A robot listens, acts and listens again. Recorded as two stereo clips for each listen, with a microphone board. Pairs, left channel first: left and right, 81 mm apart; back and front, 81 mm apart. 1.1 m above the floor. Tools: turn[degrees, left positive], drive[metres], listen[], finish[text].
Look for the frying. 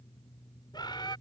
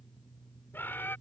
Action: listen[]
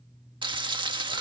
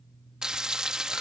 Thought: The frying: 80° right.
Action: turn[-80]
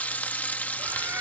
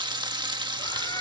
Thought: The frying is now 20° left.
Action: turn[20]
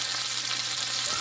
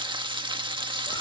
Action: finish[Facing the frying.]